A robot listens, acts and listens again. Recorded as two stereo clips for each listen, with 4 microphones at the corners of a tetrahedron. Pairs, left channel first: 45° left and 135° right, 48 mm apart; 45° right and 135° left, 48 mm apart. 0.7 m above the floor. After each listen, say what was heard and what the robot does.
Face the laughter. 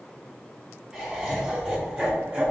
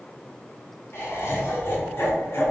The laughter: 75° right. Turn 75° right.
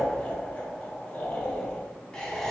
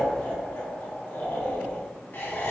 The laughter is now 30° right. Turn 30° right.
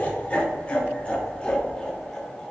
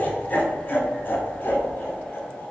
The laughter is now 25° right. Turn 25° right.
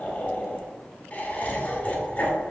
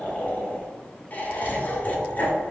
Facing the laughter, 1 to 2 m away.